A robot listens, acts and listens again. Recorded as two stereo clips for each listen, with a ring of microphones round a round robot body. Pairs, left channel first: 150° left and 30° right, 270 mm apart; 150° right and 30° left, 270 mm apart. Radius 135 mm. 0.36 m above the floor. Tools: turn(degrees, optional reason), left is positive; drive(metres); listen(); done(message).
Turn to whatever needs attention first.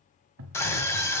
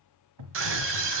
turn(degrees=70, reason="The scream: 70° left.")
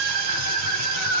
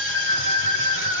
turn(degrees=-15, reason="The scream is now 15° right.")
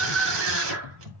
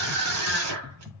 done("Facing the scream.")